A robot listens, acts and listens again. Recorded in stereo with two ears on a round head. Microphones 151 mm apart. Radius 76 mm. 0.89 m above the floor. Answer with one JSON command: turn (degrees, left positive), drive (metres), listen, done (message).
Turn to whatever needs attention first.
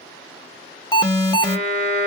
{"turn": 25}
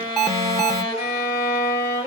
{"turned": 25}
{"done": "Found it: an alarm, straight ahead, 1 to 2 m away."}